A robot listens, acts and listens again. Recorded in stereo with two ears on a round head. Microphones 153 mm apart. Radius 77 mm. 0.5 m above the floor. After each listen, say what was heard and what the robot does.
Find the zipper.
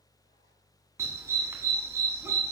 Keep listening.
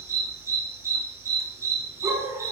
Keep listening.
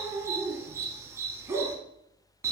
I can't make out a zipper, only a dog barking.